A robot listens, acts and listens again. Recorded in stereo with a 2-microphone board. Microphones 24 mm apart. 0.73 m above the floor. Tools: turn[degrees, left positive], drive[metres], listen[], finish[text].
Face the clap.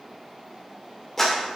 Action: turn[30]
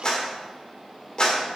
Thought: So it is at 135° left.
Action: turn[135]
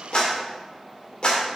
Thought: The clap is now 45° left.
Action: turn[45]
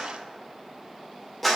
Action: finish[Facing the clap, 2 to 4 m away.]